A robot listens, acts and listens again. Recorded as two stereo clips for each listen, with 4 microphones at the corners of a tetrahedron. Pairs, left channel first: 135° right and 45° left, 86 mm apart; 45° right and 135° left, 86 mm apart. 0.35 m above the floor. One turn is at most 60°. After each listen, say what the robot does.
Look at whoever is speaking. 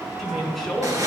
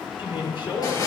Turn 45° right.
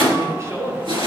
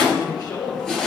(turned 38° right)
Turn 10° right.
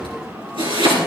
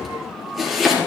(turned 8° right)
Keep listening.
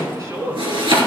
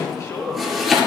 Found it: a woman speaking, straight ahead, over 4 m away.